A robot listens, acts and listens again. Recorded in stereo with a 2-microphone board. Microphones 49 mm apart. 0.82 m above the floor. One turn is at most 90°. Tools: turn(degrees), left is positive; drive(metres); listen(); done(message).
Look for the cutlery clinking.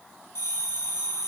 listen()
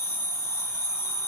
listen()
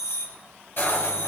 turn(degrees=45)
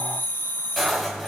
done("Found it: cutlery clinking, straight ahead, 2 to 4 m away.")